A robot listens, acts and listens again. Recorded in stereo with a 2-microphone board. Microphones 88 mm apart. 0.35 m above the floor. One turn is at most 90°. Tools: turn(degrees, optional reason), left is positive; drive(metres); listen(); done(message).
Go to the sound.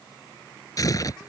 turn(degrees=40, reason="The tearing paper: about 40° left or 140° left.")
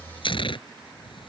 turn(degrees=90, reason="So it is at 100° left.")
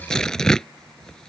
turn(degrees=10, reason="The tearing paper is now 10° left.")
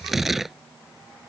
drive(metres=1.0)
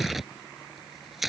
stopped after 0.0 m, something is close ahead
done("Blocked. The tearing paper is further on, straight ahead.")